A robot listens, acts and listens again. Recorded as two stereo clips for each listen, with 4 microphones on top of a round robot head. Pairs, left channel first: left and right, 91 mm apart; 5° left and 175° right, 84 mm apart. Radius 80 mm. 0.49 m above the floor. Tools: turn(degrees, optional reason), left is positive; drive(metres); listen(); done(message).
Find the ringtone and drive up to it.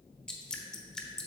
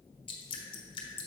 listen()
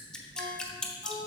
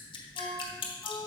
turn(degrees=-95, reason="The ringtone: 95° right.")
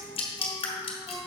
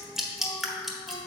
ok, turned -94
drive(metres=1.0)
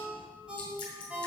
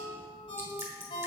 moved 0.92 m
turn(degrees=-10, reason="The ringtone is now 10° right.")
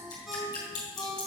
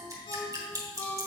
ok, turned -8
drive(metres=1.0)
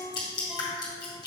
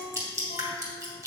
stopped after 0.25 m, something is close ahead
turn(degrees=-10, reason="The ringtone is now 10° right.")
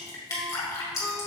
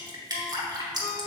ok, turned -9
listen()
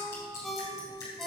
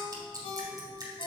done("Arrived at the ringtone, straight ahead.")